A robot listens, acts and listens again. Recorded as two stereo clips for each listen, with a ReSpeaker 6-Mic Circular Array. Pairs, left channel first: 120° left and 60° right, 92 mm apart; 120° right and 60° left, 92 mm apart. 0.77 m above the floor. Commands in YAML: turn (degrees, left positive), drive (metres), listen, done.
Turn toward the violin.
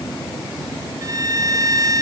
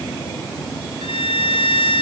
turn: -110
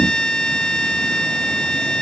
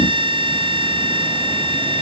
turn: 40
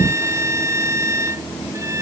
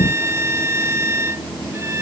done: "Facing the violin."